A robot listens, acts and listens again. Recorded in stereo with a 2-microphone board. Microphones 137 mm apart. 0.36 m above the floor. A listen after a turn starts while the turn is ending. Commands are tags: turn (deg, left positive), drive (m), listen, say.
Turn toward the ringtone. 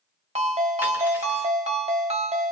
<turn deg="-50"/>
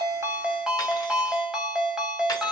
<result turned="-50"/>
<say>Facing the ringtone, under 1 m away.</say>